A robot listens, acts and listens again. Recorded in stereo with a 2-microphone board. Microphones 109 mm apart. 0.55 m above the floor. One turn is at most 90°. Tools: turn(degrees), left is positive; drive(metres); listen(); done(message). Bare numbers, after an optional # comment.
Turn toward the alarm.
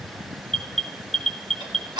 turn(30)
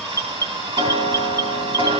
# So it is at 150° left.
turn(90)
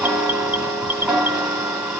# The alarm is now 55° left.
turn(55)
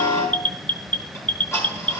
# The alarm is now 15° left.
turn(15)
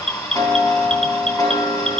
done("Found it: an alarm, straight ahead.")